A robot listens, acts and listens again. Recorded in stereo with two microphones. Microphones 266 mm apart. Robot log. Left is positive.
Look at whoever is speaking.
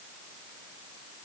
cmd idle
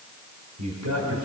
cmd yaw -90
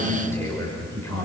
note: So it is at 10° left.
cmd yaw +10
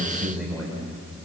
end: Facing the man speaking.